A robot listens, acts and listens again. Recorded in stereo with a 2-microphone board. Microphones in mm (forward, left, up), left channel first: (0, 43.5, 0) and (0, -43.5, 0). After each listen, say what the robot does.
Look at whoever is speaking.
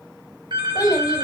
Turn 50° left.
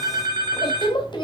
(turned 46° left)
Turn 75° left.
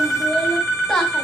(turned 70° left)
Found it: a child speaking, straight ahead, 2 to 4 m away.